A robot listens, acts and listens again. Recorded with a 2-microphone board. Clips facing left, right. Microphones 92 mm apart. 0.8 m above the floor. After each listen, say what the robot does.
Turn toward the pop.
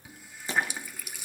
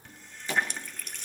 Turn 20° left.
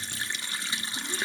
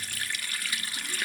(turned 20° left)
Keep listening.
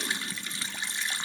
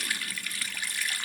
I heard a pop, but can't make it out now. It was about straight ahead or 140° left.